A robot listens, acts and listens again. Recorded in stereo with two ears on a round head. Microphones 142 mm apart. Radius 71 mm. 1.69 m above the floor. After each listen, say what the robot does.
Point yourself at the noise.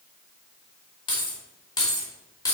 Turn 20° left.
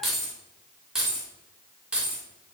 Turn 10° right.
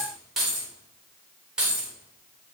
Found it: keys jangling, straight ahead, 2 to 4 m away.